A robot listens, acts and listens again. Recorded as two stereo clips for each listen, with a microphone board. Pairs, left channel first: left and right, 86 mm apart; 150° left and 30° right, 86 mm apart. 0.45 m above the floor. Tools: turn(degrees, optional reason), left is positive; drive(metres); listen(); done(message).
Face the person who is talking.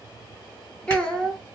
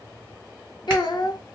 turn(degrees=170, reason="The child speaking: 170° left.")
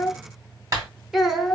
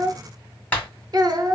done("Found it: a child speaking, straight ahead, under 1 m away.")